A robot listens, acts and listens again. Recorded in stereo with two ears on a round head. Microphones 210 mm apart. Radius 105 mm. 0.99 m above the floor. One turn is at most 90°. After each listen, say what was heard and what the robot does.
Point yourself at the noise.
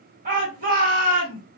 The shout: about 35° right or 145° right. Turn 35° right.
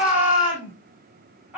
Found it: a shout, straight ahead, 1 to 2 m away.